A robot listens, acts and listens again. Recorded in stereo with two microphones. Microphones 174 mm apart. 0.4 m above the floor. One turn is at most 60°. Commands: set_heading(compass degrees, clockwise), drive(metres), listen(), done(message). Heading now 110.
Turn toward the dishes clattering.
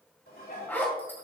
set_heading(50)
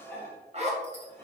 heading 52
set_heading(37)
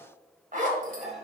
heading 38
done("Found it: dishes clattering, straight ahead.")